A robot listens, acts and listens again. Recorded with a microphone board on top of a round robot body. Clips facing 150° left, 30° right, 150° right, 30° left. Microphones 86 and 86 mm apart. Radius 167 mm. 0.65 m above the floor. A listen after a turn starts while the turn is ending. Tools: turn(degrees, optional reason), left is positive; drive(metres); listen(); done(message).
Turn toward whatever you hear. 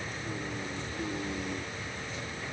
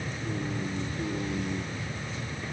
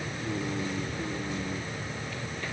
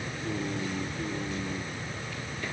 listen()
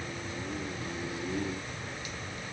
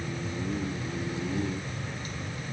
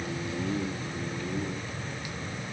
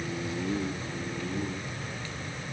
listen()
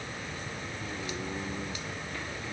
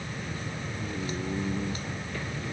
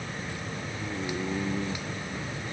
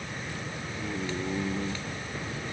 done("I can't make out anything.")